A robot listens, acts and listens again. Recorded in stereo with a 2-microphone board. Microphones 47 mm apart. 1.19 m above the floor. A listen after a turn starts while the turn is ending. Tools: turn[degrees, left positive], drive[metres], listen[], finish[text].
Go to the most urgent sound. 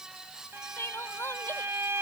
Thought: The crying: about 60° left or 120° left.
Action: turn[60]
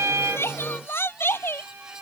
Thought: So it is at 60° left.
Action: turn[60]
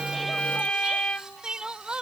Thought: The crying is now 20° right.
Action: turn[-20]
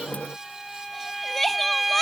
Action: drive[1.0]
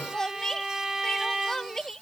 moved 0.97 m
Thought: The crying is now 15° left.
Action: turn[15]
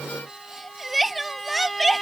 Action: drive[1.0]
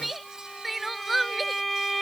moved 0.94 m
Action: drive[1.0]
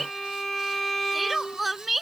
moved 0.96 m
Action: drive[1.0]
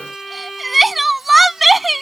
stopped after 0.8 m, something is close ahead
Action: finish[Arrived at the crying, straight ahead.]